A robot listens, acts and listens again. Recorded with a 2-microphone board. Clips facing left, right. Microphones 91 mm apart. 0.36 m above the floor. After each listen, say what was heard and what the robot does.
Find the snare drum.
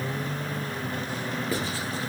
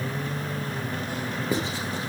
Keep listening.
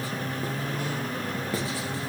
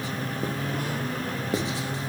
Keep listening.
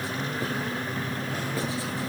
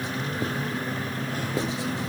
I can't make out a snare drum, only writing.